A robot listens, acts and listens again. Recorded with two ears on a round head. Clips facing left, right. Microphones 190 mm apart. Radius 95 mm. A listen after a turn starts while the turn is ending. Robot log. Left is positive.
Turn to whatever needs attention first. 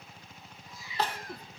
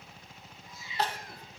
note: The crying: about 70° left or 110° left.
cmd yaw +70
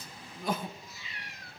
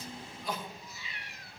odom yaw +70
note: So it is at 40° left.
cmd yaw +40
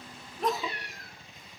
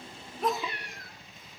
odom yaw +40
end: Found it: crying, straight ahead, under 1 m away.